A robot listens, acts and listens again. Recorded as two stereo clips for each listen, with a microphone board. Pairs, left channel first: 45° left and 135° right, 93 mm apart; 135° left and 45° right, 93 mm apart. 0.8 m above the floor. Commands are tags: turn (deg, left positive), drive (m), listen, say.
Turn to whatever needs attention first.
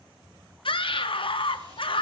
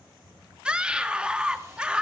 <turn deg="35"/>
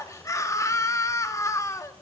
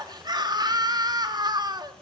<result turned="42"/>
<turn deg="-10"/>
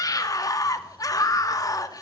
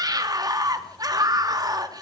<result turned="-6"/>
<say>Facing the scream, 1 to 2 m away.</say>